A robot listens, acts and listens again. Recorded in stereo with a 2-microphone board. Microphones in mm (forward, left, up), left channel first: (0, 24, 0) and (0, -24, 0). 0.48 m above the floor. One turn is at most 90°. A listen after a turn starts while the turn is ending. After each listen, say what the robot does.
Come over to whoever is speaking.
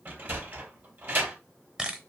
Keep listening.
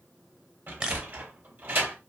Keep listening.
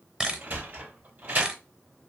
I can't make out anyone speaking to turn to.